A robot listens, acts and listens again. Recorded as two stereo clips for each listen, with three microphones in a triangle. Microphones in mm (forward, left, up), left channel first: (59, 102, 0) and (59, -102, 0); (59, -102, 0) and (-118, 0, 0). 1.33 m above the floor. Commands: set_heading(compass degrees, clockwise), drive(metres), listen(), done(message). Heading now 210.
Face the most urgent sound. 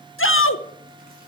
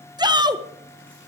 set_heading(130)
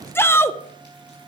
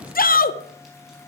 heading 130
set_heading(120)
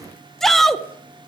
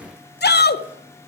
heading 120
done("Found it: a shout, straight ahead.")